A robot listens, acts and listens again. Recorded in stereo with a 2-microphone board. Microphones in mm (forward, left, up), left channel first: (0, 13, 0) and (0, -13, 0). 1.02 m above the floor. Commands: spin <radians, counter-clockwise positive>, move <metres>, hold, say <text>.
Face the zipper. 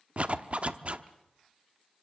spin -0.87
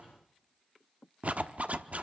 spin -1.31
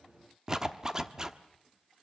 spin -0.44
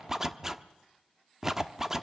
spin -0.35
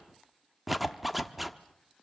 say Found it: a zipper, straight ahead.